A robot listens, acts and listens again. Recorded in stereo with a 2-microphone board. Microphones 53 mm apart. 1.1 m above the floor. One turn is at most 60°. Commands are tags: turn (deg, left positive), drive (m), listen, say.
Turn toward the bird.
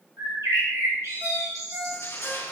<turn deg="-60"/>
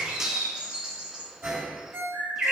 <turn deg="-20"/>
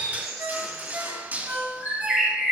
<say>Facing the bird, 2 to 4 m away.</say>